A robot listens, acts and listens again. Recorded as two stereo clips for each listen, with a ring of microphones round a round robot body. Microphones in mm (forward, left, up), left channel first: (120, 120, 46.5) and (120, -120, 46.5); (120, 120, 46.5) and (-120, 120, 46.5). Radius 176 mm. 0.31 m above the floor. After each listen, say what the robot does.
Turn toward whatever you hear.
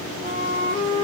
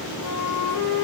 Turn 20° right.
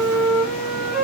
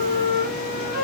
Facing the flute, 2 to 4 m away.